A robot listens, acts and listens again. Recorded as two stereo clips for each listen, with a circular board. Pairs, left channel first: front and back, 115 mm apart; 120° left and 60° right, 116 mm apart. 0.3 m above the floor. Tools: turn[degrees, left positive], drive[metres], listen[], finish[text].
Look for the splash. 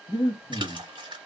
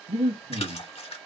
Thought: The splash: 140° left.
Action: turn[140]
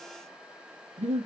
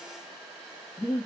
Action: finish[Facing where the splash came from. I can't hear it now.]